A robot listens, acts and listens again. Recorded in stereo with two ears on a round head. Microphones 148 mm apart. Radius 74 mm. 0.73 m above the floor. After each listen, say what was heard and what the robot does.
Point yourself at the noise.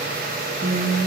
Turn 90° right.
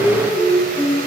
Found it: singing, straight ahead.